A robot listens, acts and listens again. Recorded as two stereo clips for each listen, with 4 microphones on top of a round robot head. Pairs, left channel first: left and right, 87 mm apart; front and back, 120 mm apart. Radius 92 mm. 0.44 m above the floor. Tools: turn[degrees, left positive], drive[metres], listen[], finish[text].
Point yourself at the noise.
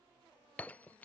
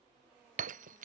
Thought: The breaking glass: 170° left.
Action: turn[170]
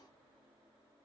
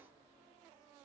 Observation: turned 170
Action: finish[Facing where the breaking glass came from. I can't hear it now.]